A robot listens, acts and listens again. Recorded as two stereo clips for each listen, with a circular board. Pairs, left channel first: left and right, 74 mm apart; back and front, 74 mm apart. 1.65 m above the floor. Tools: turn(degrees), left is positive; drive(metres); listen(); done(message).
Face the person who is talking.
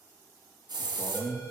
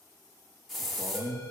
turn(degrees=35)
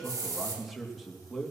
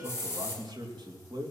done("Found it: a man speaking, straight ahead.")